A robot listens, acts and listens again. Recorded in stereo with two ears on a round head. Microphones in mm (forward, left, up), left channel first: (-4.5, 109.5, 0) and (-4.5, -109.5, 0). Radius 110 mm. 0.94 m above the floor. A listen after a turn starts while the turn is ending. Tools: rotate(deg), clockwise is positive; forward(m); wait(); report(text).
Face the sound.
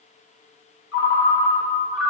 rotate(-50)
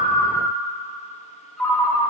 report("Facing the ringtone, 1 to 2 m away.")